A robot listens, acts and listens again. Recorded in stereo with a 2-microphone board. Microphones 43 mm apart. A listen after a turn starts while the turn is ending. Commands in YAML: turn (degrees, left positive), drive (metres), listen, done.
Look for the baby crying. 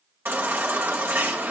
turn: -65
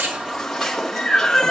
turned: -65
done: "Facing the baby crying."